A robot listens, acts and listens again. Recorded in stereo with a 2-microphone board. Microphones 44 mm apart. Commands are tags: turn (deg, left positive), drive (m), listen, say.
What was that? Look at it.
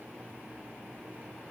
<listen/>
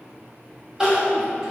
<turn deg="-30"/>
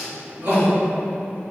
<turn deg="-135"/>
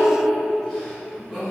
<say>Found it: crying, straight ahead, 1 to 2 m away.</say>